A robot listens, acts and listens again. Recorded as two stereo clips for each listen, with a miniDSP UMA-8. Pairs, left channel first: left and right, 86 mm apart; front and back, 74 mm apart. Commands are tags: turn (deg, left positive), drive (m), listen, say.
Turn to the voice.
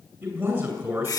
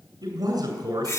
<turn deg="-150"/>
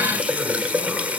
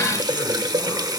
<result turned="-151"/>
<listen/>
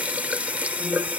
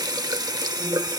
<listen/>
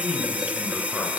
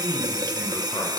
<say>Facing the man speaking.</say>